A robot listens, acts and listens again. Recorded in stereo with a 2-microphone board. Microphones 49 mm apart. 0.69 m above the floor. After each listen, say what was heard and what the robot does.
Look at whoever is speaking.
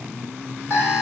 Keep listening.
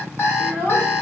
The child speaking: about 35° left or 145° left. Turn 35° left.
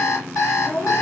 So it is at 100° left. Turn 100° left.
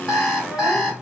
Keep listening.
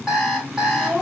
The child speaking is now 30° right. Turn 30° right.
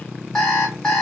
Keep listening.
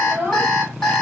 The child speaking is now 30° right. Turn 30° right.
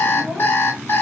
Keep listening.
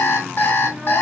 Keep listening.
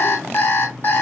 I heard a child speaking from this way, but can't make it out now.